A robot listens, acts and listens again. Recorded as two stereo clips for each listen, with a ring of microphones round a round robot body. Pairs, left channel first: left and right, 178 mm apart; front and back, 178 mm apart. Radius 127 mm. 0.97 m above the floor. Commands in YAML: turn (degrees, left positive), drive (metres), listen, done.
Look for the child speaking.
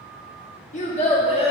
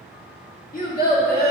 turn: 30
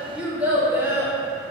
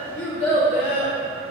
turn: -15
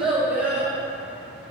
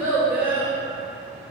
turn: -10
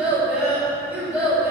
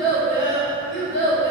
turn: -15
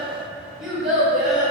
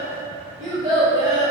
done: "Found it: a child speaking, straight ahead."